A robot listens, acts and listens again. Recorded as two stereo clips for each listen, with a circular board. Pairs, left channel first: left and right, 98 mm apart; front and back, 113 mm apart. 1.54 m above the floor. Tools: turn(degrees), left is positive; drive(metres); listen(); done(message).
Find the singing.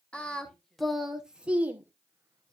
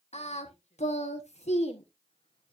turn(degrees=-20)
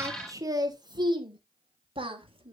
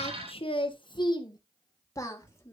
turn(degrees=-70)
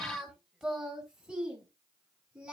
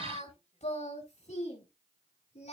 turn(degrees=-10)
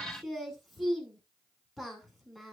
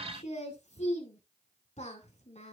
done("Facing the singing.")